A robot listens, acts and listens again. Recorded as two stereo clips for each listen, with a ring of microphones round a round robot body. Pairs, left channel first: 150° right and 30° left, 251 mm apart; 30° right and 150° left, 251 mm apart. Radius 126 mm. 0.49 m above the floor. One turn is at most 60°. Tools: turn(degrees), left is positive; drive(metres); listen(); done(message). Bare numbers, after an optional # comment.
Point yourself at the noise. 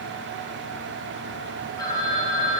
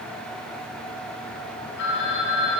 # The phone ringing: 75° right.
turn(-60)
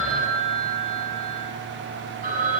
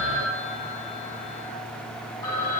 # The phone ringing is now 25° right.
turn(-25)
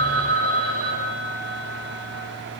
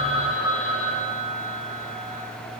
done("Facing the phone ringing.")